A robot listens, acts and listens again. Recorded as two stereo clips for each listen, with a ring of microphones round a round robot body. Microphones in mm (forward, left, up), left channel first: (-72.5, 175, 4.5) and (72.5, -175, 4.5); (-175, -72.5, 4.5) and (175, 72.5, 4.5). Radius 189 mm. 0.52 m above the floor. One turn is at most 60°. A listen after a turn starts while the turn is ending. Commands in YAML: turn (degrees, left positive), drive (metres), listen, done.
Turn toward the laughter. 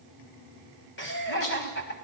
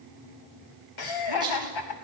turn: 60
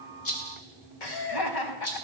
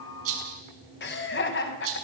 turn: 60
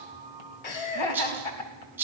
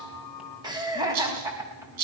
turn: 60
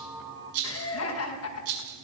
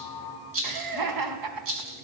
turn: 60
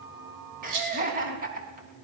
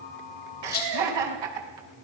done: "Facing the laughter, over 4 m away."